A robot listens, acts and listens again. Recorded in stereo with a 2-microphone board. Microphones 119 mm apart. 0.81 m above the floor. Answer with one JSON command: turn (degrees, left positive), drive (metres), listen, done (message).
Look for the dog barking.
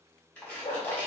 {"turn": 60}
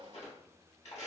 {"listen": true}
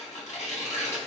{"listen": true}
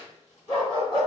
{"turn": 45}
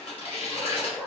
{"turn": 10}
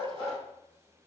{"turn": 10}
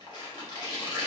{"listen": true}
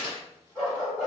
{"done": "Facing the dog barking."}